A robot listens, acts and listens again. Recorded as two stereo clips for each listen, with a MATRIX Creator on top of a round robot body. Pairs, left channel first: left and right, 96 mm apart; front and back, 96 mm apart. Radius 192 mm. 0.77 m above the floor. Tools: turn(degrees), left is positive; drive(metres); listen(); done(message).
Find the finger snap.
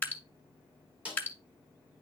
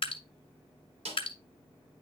listen()
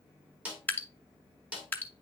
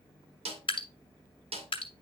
listen()
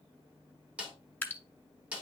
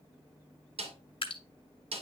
done("I can't make out a finger snap, only dripping and a snare drum.")